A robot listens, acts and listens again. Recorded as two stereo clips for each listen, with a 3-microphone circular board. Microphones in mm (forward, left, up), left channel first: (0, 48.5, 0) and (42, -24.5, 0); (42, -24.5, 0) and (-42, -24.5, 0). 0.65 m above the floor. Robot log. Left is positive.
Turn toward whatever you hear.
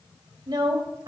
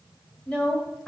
note: The woman speaking: 75° right.
cmd yaw -75
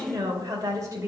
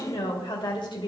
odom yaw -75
note: The woman speaking is now 15° right.
cmd yaw -15
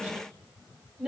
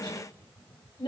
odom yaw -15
note: The woman speaking is now 20° left.
cmd yaw +20
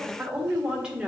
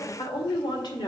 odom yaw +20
note: The woman speaking is now 20° left.
cmd yaw +20
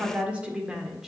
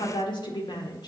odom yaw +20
note: The woman speaking is now 25° left.
cmd yaw +25
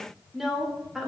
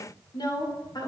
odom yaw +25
note: The woman speaking is now 25° left.
cmd yaw +25
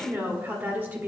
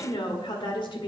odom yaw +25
end: Found it: a woman speaking, straight ahead, 1 to 2 m away.